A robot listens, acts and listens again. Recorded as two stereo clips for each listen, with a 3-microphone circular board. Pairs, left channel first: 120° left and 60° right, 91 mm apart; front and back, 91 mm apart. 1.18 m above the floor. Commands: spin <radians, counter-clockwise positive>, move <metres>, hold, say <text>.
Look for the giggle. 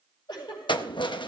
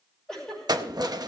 spin 1.48
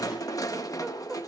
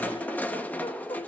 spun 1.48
hold
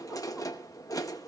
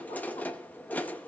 hold
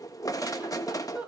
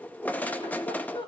spin 0.17
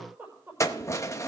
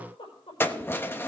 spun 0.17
say Facing the giggle.